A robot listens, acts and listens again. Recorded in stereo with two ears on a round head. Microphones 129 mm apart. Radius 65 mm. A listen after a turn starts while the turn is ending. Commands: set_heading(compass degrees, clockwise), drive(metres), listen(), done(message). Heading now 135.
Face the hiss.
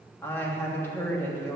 listen()
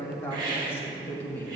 set_heading(165)
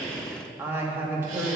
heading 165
listen()
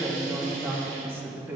listen()
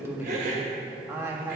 set_heading(280)
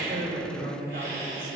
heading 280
set_heading(305)
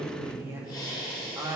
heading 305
set_heading(280)
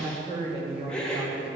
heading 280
done("Facing the hiss, 1 to 2 m away.")